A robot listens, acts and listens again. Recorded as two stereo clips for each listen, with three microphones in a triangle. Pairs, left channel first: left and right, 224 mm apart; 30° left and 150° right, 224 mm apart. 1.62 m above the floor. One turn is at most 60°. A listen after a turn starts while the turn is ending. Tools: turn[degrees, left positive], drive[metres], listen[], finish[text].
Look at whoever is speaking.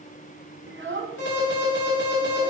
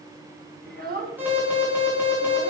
Thought: The child speaking: 110° right.
Action: turn[-60]
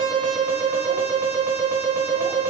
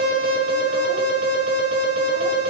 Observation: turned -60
Thought: Nothing new. It was at 50° right.
Action: turn[-50]
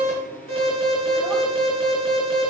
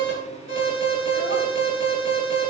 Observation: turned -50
Action: listen[]
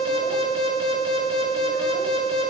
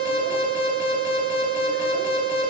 Action: finish[Facing where the child speaking came from. I can't hear it now.]